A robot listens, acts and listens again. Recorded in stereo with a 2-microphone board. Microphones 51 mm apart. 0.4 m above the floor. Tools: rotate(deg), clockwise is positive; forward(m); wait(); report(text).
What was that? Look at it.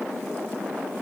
wait()
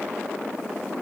wait()
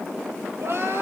rotate(65)
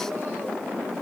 wait()
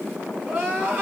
rotate(40)
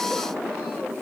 wait()
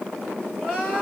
rotate(10)
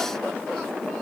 wait()
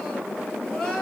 report("Found it: crying, straight ahead, 2 to 4 m away.")